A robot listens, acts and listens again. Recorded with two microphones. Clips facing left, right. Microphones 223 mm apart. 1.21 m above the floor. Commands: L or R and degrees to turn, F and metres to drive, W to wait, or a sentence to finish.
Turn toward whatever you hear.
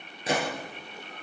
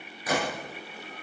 L25
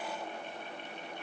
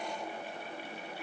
W
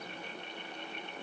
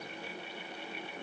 I heard a gunshot, but can't make it out now. It was about straight ahead or 130° left.